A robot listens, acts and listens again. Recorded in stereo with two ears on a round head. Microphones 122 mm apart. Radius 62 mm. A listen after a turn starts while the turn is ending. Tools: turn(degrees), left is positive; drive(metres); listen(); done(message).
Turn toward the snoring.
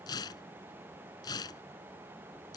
listen()
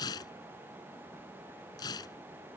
listen()
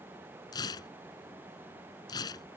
done("I can't make out snoring, only tearing paper.")